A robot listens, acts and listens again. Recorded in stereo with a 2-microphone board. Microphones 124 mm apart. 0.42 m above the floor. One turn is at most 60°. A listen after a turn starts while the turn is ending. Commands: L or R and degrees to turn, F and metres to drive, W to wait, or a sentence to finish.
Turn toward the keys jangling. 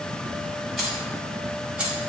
R30
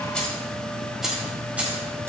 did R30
R30
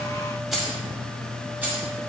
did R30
R15
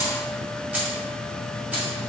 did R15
R30
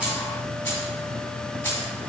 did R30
L20
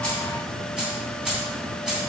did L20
Facing the keys jangling, 2 to 4 m away.